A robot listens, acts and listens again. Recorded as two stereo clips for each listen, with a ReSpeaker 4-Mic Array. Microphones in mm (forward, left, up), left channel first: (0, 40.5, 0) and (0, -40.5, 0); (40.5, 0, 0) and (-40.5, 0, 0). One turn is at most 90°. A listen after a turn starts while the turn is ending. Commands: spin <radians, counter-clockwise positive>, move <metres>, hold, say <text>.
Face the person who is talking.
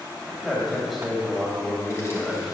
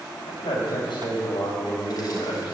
spin -0.17
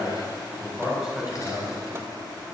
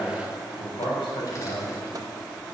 spin -0.17
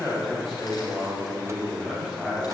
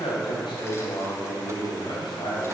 spin -0.17
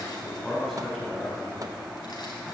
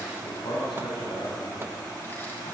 say Facing the man speaking, over 4 m away.